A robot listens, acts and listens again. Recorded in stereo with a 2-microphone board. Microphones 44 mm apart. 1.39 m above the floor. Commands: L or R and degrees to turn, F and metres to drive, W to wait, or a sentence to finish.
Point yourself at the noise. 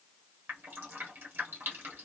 R55
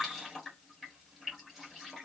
Facing the dripping.